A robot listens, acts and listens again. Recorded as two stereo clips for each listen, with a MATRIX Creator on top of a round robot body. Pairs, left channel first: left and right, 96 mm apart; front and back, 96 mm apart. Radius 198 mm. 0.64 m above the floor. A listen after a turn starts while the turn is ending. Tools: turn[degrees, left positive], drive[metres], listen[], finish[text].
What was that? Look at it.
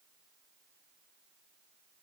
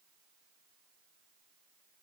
Action: listen[]
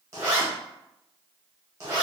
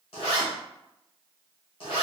Thought: The zipper: 30° right.
Action: turn[-30]
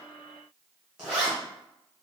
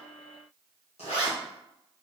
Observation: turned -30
Action: finish[Found it: a zipper, straight ahead, 1 to 2 m away.]